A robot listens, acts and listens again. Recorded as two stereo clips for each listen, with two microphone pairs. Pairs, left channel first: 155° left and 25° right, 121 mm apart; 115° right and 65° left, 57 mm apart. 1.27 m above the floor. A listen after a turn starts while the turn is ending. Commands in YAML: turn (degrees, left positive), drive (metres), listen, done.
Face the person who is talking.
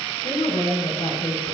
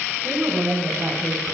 turn: 125
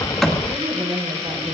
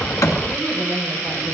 done: "Found it: a woman speaking, straight ahead."